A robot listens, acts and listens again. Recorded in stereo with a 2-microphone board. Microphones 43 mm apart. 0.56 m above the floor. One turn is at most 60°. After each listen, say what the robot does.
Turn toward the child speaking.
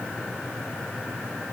Keep listening.
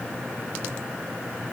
Keep listening.
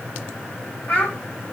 Turn 45° left.
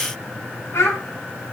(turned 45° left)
Turn 60° left.
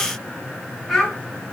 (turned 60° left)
Turn 10° right.
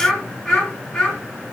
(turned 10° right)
Facing the child speaking.